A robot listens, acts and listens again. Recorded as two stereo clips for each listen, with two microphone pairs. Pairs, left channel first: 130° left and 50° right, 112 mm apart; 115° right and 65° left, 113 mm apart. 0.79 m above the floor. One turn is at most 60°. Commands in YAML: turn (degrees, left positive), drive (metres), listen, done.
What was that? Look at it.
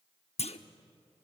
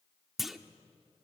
turn: 60
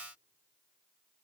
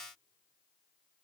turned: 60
turn: 60
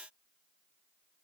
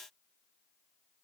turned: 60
turn: 35
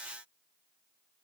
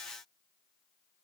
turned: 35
done: "I heard a clunk from this way, but can't make it out now."